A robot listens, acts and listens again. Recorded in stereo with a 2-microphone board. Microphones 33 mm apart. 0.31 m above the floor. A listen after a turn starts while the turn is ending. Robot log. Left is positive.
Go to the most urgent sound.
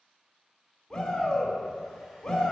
note: The shout: about 15° left or 165° left.
cmd yaw +15
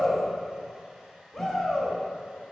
cmd fwd 1.0
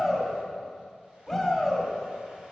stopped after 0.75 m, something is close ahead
end: Arrived at the shout, straight ahead.